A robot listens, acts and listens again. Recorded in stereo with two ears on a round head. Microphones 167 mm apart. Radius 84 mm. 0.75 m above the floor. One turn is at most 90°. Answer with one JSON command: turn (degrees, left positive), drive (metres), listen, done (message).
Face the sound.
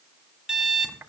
{"turn": -30}
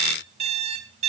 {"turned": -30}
{"turn": -90}
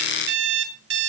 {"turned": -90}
{"turn": -65}
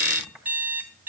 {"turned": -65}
{"turn": -10}
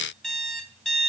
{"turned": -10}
{"done": "Found it: an alarm clock, straight ahead."}